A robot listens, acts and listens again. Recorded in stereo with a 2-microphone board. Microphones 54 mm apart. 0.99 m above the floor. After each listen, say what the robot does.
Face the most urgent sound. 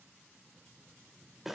Keep listening.
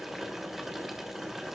Keep listening.
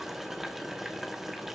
I can't make out anything urgent to turn to.